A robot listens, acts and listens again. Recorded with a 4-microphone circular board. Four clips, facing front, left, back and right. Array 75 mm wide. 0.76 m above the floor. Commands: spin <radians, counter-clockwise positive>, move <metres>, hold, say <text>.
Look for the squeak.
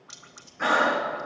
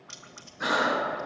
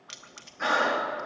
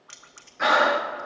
hold
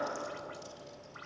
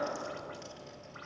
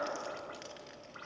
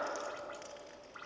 hold
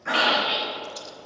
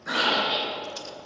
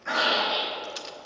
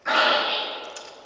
spin -0.70
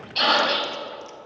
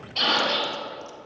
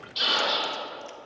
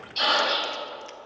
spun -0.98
spin 0.26
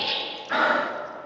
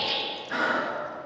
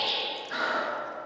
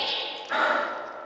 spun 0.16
say Facing the squeak, 2 to 4 m away.